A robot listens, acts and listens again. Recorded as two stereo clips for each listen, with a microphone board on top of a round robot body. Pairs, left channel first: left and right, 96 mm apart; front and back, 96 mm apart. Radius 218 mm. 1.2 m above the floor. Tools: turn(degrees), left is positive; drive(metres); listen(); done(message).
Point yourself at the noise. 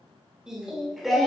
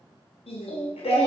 done("Found it: singing, straight ahead.")